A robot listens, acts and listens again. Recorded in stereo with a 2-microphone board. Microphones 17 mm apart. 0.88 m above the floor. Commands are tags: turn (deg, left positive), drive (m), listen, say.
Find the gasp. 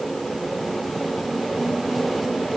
<listen/>
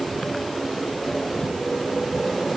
<listen/>
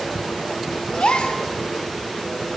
<turn deg="75"/>
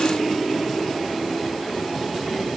<listen/>
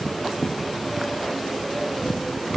<say>I heard a gasp, but can't make it out now. It was about straight ahead or 30° left.</say>